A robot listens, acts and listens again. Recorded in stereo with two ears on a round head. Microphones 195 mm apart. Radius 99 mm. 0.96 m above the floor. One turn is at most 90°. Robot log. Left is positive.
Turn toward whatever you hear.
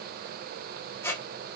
cmd yaw +30
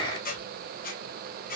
note: So it is at 135° left.
cmd yaw +90
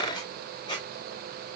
note: The squeak is now 20° left.
cmd yaw +20
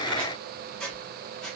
end: Facing the squeak, under 1 m away.